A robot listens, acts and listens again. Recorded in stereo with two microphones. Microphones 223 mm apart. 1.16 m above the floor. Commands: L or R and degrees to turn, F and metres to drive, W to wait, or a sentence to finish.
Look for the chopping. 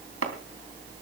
R90
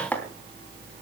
Found it: chopping, straight ahead, 2 to 4 m away.